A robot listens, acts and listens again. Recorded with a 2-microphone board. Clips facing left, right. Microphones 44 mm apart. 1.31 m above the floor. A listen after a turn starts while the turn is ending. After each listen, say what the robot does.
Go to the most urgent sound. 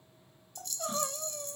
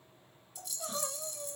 Turn 20° left.
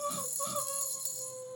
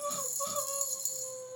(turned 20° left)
Drive 1.0 m forward.
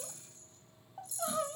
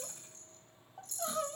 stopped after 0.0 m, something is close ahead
Blocked. The crying is further on, straight ahead.